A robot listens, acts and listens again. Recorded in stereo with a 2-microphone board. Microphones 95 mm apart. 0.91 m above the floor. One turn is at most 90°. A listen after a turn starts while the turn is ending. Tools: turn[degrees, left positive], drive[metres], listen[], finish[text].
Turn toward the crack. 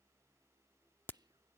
Thought: The crack: about 20° left or 160° left.
Action: turn[20]
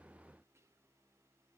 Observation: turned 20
Action: listen[]
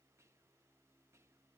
Action: finish[I heard a crack, but can't make it out now. It was about straight ahead or 140° left.]